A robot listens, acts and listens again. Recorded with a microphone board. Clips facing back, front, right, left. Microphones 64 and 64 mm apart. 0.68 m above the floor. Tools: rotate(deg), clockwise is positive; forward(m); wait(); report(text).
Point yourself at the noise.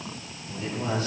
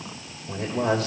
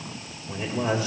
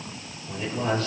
rotate(10)
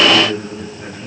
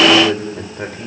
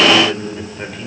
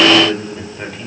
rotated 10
report("Facing the man speaking.")